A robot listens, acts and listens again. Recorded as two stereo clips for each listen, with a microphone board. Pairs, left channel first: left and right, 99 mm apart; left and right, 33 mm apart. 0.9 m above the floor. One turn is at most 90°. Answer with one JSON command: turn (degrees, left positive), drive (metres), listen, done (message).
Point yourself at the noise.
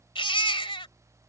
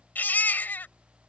{"turn": 60}
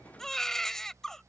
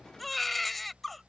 {"done": "Found it: a baby crying, straight ahead."}